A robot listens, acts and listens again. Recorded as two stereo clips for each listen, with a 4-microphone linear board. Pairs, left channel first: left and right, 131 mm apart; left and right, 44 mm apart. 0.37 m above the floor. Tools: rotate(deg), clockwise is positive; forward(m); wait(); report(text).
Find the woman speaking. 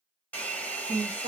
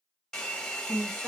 rotate(50)
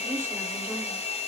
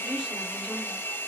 wait()
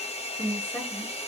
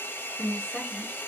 rotate(-15)
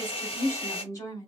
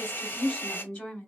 rotate(-30)
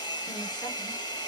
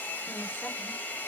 wait()
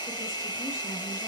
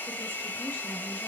wait()
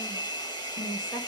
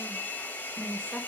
rotate(-25)
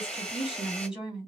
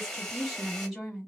report("Facing the woman speaking, 2 to 4 m away.")